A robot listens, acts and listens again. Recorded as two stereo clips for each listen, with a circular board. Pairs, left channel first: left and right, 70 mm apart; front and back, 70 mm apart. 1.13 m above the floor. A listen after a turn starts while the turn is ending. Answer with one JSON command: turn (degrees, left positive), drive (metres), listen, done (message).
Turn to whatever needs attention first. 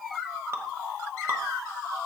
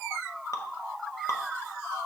{"listen": true}
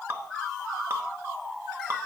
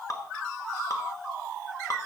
{"listen": true}
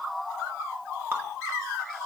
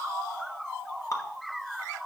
{"done": "I can't make out anything urgent, only dripping."}